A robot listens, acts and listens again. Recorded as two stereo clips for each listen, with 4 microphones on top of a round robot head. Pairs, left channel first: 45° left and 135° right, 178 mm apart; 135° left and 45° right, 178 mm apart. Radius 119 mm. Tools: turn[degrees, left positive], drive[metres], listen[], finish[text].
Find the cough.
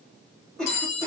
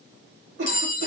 Thought: The cough: 40° right.
Action: turn[-40]
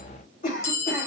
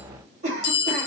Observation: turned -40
Action: finish[Found it: a cough, straight ahead.]